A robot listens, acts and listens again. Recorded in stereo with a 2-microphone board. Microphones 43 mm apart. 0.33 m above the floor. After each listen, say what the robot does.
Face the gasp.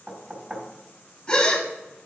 Turn 20° left.
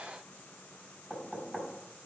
Keep listening.
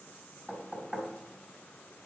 I heard a gasp, but can't make it out now. It was about straight ahead or 140° left.